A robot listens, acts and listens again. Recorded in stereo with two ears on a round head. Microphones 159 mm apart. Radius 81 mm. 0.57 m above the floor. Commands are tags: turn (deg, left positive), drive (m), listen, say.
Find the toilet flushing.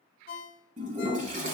<turn deg="-40"/>
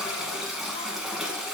<say>Facing the toilet flushing, 1 to 2 m away.</say>